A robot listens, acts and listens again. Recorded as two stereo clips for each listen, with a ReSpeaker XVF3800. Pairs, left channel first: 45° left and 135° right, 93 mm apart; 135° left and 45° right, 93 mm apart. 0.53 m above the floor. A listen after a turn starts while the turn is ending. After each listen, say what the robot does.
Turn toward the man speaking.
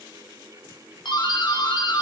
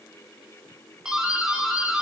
Keep listening.
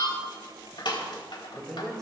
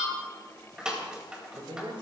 Turn 40° right.
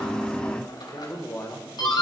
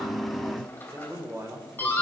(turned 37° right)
Facing the man speaking.